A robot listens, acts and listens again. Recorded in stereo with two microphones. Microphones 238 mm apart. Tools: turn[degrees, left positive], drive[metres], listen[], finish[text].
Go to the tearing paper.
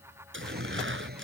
Thought: The tearing paper: about 55° right or 125° right.
Action: turn[-55]
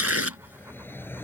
Thought: So it is at 75° right.
Action: turn[-75]
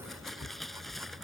Action: drive[1.0]
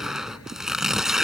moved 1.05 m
Action: drive[1.0]
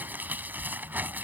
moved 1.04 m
Action: drive[1.0]
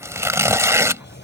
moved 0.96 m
Thought: The tearing paper is now 10° right.
Action: turn[-10]
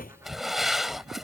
Action: drive[1.0]
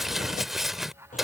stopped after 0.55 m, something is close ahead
Action: finish[Arrived at the tearing paper, straight ahead.]